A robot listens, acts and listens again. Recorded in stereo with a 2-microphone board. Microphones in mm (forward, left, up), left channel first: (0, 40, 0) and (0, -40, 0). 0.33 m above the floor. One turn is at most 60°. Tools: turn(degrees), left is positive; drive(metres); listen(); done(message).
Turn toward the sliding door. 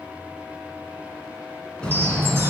turn(degrees=30)
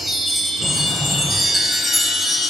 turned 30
turn(degrees=60)
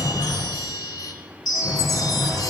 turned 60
turn(degrees=60)
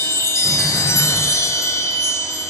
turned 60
listen()
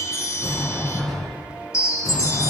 done("Found it: a sliding door, straight ahead, 2 to 4 m away.")